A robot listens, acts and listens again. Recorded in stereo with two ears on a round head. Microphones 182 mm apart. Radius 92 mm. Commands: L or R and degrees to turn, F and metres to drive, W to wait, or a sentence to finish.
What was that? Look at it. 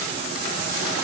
W
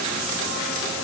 W
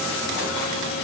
I can't make out anything to turn to.